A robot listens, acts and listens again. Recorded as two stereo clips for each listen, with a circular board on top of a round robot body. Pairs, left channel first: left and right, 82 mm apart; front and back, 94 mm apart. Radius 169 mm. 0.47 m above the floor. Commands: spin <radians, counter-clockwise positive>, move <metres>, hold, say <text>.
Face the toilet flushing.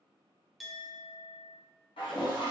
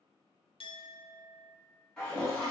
spin 1.48
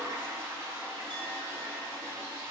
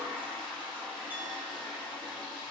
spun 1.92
spin -0.44
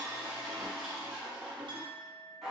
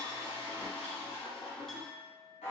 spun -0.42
say Found it: a toilet flushing, straight ahead, 1 to 2 m away.